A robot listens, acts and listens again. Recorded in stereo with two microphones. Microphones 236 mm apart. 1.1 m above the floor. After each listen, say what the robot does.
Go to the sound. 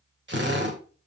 Turn 50° right.
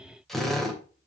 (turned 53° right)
Drive 1.0 m forward.
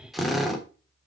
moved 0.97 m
Drive 1.0 m forward.
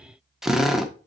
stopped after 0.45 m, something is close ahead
Arrived at the drill, straight ahead.